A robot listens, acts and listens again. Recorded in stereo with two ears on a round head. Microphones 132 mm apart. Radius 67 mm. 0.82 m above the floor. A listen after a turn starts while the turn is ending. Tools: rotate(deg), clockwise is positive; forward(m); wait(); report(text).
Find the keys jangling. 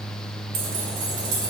rotate(90)
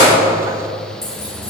wait()
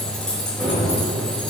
report("Facing the keys jangling.")